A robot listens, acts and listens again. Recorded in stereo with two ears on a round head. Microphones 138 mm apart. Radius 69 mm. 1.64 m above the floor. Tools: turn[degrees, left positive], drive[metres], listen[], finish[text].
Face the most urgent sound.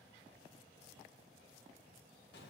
Action: listen[]
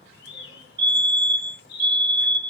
Thought: The fire alarm: about 30° right or 150° right.
Action: turn[-30]
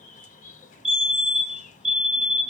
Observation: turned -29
Action: finish[Facing the fire alarm.]